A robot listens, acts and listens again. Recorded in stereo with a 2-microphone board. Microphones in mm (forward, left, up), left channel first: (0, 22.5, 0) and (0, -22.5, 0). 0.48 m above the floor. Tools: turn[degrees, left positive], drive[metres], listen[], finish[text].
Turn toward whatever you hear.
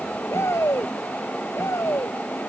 Action: turn[90]
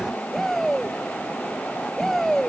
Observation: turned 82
Action: finish[Found it: a shout, straight ahead.]